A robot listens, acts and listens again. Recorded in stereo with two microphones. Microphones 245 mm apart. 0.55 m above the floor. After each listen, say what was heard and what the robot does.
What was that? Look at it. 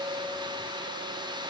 Keep listening.
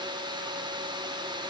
Keep listening.
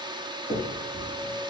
The finger snap: about 30° right or 150° right. Turn 30° right.
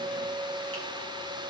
Keep listening.
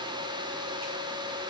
Keep listening.
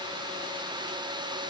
I heard a finger snap, but can't make it out now. It was about straight ahead or 120° right.